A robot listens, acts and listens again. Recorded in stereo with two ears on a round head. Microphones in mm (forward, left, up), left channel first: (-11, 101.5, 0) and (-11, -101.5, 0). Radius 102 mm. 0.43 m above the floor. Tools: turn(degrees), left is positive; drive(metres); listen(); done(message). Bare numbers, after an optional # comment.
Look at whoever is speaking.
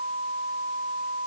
listen()
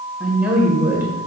turn(-30)
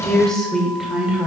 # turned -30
turn(-30)
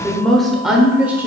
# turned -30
turn(-30)
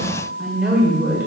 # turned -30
turn(-30)
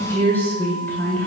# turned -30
# So it is at 10° left.
turn(10)
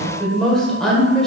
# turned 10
done("Facing the woman speaking, 1 to 2 m away.")